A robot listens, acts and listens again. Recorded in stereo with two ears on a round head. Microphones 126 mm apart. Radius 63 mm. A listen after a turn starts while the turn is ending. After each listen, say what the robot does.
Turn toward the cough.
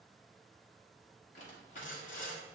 Keep listening.
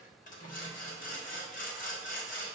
Keep listening.
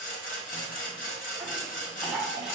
Turn 30° right.
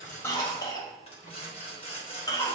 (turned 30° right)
Turn 25° left.
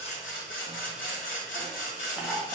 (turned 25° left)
Facing the cough, under 1 m away.